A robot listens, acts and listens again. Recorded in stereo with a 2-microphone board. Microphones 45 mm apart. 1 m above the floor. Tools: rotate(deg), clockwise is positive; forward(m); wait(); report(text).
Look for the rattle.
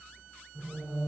wait()
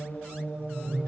wait()
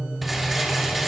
rotate(-30)
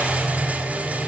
rotate(35)
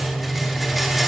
wait()
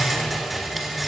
report("Facing the rattle, under 1 m away.")